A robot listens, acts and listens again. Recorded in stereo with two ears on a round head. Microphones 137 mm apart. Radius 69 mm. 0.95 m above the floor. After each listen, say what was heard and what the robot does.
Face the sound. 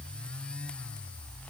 Keep listening.
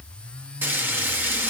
Turn 30° right.
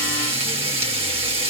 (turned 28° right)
So it is at 135° right. Turn 135° right.
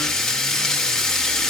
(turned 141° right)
Facing the frying.